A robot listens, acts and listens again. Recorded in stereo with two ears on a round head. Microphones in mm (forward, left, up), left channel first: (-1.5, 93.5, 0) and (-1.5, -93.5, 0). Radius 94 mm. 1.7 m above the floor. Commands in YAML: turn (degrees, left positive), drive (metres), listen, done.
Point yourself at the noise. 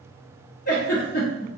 turn: 45
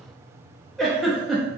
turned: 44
done: "Facing the giggle, under 1 m away."